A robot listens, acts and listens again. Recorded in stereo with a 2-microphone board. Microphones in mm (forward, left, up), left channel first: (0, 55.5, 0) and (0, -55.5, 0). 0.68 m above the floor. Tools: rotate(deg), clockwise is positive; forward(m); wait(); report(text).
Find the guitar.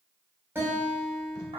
rotate(20)
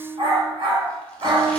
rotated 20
rotate(145)
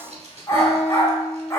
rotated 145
rotate(60)
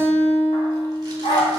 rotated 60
rotate(-15)
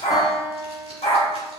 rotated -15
report("Facing the guitar.")